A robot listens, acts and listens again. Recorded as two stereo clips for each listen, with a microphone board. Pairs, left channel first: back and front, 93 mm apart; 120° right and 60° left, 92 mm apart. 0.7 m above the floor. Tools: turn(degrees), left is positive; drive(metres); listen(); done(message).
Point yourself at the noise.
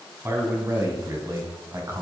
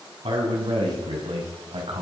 turn(degrees=55)
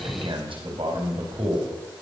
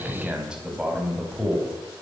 turn(degrees=-25)
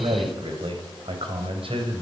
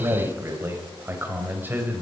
turn(degrees=-10)
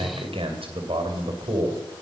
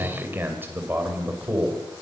turn(degrees=-10)
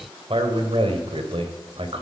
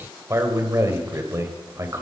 done("Found it: a man speaking, straight ahead, 2 to 4 m away.")